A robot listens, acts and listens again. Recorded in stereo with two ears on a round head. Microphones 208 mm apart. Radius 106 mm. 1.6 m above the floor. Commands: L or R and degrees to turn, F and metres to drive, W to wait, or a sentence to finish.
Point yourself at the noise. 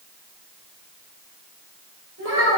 R55
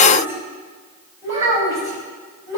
R15
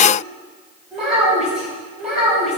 Found it: a child speaking, straight ahead, over 4 m away.